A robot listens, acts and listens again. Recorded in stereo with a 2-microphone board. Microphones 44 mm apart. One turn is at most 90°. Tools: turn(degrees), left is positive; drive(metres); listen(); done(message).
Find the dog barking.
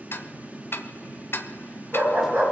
turn(degrees=-70)
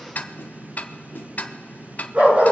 turn(degrees=-35)
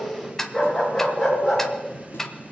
done("Found it: a dog barking, straight ahead.")